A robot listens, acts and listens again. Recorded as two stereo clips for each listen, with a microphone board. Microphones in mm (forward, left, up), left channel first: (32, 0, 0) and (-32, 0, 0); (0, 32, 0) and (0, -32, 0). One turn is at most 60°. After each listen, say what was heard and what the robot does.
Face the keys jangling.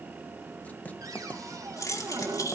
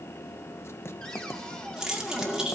The keys jangling: 10° right. Turn 10° right.
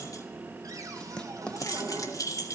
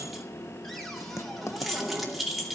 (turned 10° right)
Found it: keys jangling, straight ahead.